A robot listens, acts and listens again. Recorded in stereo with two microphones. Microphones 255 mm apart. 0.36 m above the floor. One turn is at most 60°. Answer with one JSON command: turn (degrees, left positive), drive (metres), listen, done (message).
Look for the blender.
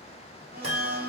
{"turn": -40}
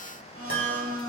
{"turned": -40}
{"turn": -60}
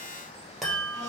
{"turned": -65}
{"turn": -30}
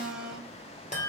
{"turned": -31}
{"done": "Found it: a blender, straight ahead."}